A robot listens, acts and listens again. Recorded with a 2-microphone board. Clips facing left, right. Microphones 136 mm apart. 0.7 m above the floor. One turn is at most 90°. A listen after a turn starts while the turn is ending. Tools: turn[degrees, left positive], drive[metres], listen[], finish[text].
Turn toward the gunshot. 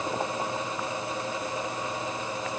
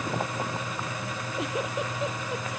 Action: listen[]
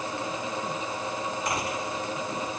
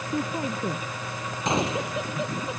Thought: The gunshot: about 25° right or 155° right.
Action: turn[-25]
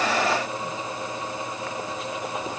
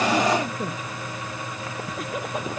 Action: listen[]
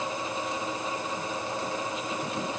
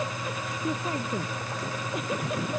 Action: finish[I heard a gunshot, but can't make it out now. It was about straight ahead or 130° right.]